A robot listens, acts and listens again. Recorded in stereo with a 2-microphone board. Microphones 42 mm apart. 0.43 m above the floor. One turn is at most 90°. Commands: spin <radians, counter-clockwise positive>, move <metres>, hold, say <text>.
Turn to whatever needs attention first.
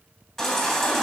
spin 0.52
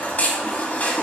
spin 1.57
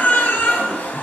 spin 0.87
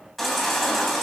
say Facing the baby crying.